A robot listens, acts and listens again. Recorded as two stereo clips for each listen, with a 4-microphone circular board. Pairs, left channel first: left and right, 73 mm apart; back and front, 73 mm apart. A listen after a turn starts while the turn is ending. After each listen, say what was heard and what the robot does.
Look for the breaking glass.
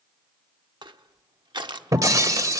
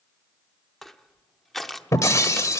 The breaking glass: 135° right. Turn 135° right.
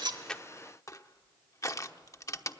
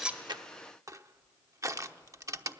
Facing where the breaking glass came from. I can't hear it now.